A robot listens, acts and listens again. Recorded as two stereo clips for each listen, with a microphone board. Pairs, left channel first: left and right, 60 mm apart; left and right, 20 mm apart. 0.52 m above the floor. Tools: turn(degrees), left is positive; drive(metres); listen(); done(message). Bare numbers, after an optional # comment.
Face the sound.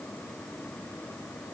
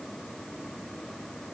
listen()
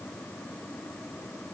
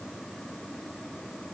listen()
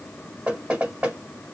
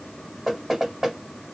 # The knocking: about 15° right or 165° right.
turn(-15)
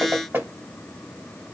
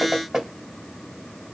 # So it is at 150° right.
turn(-150)
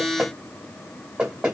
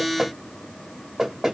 # The knocking is now 20° right.
turn(-20)
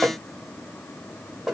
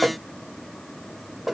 # The knocking is now 10° right.
turn(-10)
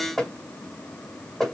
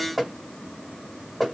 done("Found it: knocking, straight ahead.")